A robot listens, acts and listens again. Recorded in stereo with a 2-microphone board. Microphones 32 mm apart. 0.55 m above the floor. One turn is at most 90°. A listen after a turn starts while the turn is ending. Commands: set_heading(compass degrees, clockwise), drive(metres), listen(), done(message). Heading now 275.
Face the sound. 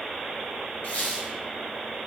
set_heading(205)
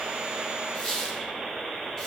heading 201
set_heading(186)
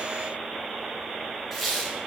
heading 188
done("Facing the squeak, 1 to 2 m away.")